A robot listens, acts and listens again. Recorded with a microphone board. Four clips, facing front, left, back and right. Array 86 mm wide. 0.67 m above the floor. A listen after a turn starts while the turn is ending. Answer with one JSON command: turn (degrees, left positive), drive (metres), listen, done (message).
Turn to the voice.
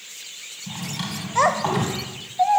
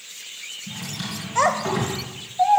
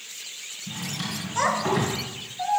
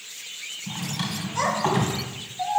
{"turn": 35}
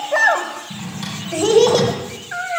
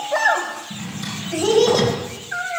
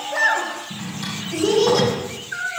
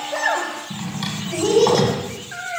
{"done": "Facing the child speaking."}